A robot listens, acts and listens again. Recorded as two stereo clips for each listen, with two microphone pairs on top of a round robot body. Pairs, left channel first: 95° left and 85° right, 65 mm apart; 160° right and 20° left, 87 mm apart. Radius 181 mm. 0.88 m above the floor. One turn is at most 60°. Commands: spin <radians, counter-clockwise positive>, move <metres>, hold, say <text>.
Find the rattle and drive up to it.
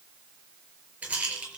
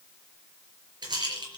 spin -0.26
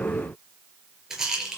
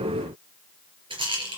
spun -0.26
move 1.0
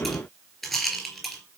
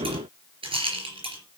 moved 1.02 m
spin 0.17
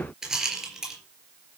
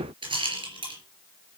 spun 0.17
move 1.0
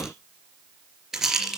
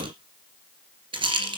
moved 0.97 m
move 1.0
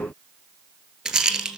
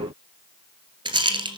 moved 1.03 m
move 1.0
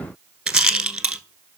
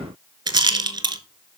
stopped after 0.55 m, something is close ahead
spin -0.17
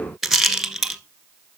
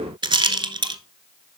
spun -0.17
say I am next to the rattle.